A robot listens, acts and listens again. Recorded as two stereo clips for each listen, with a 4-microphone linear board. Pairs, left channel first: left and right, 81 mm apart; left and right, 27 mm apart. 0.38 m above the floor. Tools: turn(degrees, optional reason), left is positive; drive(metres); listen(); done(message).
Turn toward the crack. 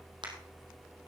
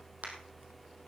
listen()
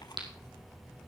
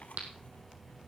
turn(degrees=-90)
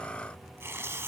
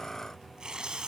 done("Facing where the crack came from. I can't hear it now.")